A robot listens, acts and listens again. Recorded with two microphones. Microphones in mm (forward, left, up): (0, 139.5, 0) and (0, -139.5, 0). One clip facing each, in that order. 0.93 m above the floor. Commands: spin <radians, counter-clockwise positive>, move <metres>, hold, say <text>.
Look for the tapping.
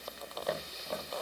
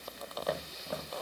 spin 0.52
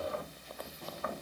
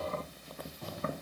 spin -0.61
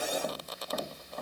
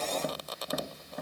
spin -0.17
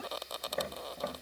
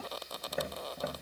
say Found it: tapping, straight ahead, 1 to 2 m away.